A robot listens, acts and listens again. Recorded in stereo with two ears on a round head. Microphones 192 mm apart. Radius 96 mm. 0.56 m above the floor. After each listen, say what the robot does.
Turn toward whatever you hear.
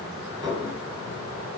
Turn 15° right.
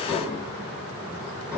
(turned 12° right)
Found it: dishes clattering, straight ahead.